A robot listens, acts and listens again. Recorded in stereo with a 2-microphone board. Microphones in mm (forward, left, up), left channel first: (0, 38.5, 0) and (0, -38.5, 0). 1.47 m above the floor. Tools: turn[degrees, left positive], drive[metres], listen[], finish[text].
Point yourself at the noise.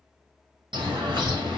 Action: turn[-90]
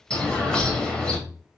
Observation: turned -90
Thought: So it is at 10° left.
Action: turn[10]
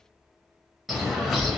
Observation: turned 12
Action: finish[Facing the bird.]